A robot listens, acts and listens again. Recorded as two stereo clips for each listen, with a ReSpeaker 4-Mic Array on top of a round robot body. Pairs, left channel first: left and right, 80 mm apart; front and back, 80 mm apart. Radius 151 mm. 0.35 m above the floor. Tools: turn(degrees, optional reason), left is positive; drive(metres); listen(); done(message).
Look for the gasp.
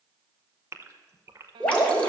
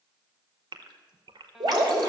turn(degrees=-150, reason="The gasp: 150° right.")
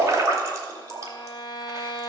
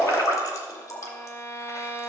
done("Facing where the gasp came from. I can't hear it now.")